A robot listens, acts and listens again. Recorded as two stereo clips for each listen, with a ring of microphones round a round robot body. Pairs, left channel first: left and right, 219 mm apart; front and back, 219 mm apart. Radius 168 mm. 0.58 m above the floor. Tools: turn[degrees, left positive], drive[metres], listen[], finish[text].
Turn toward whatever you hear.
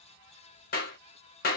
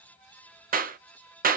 Thought: The clap: 135° left.
Action: turn[135]
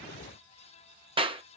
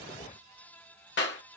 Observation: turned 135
Thought: The clap is now 25° right.
Action: turn[-25]
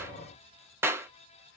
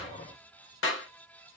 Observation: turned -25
Thought: The clap is now 10° right.
Action: turn[-10]
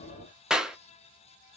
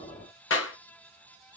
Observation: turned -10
Action: finish[Facing the clap.]